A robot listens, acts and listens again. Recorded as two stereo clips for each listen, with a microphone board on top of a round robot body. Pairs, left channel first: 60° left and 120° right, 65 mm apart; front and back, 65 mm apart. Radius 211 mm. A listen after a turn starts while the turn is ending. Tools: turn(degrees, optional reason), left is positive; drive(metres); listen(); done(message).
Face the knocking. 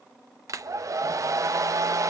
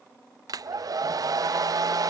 listen()
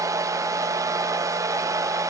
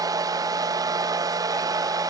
listen()
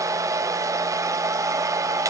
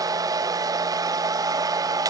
done("I can't make out knocking, only a hair dryer.")